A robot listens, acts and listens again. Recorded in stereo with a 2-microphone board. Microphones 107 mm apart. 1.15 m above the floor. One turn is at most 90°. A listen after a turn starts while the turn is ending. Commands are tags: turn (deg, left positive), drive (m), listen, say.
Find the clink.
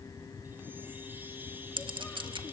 <turn deg="-50"/>
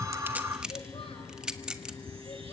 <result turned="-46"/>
<say>Found it: a clink, straight ahead, 1 to 2 m away.</say>